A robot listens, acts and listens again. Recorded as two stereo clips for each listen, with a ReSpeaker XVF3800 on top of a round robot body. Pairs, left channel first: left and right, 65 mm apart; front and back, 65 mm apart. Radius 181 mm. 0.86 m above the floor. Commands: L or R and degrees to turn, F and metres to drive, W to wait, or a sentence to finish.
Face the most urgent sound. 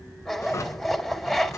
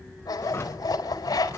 W
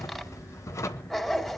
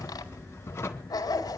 W
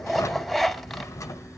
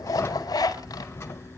I can't make out anything urgent, only a drawer and a zipper.